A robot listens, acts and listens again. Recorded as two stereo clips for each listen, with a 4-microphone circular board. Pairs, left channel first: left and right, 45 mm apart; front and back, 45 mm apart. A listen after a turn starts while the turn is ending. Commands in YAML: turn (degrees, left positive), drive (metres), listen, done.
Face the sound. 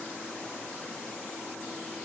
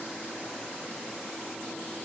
listen: true
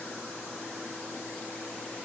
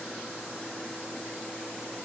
listen: true
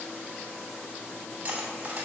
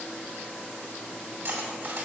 turn: -150
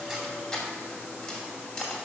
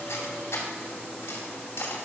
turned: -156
done: "Facing the cutlery clinking."